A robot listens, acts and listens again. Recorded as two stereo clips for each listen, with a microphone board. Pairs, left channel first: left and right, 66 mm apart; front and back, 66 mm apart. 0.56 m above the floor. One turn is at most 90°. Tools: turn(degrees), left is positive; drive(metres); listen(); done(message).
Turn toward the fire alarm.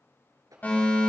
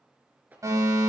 turn(degrees=90)
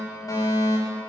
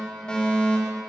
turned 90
turn(degrees=75)
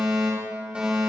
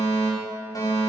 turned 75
turn(degrees=-15)
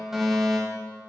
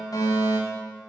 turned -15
done("Facing the fire alarm.")